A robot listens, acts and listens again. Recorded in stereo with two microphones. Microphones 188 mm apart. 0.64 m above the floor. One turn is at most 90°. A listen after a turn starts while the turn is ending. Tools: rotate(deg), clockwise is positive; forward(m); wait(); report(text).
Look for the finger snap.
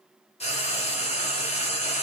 wait()
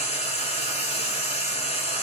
wait()
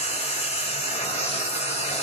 report("I can't make out a finger snap, only frying.")